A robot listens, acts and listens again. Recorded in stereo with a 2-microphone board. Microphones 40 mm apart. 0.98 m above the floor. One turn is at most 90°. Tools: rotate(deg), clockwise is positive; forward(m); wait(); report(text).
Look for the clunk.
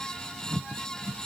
wait()
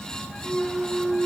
rotate(-20)
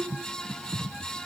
wait()
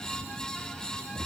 report("I heard a clunk, but can't make it out now. It was about straight ahead or 140° left.")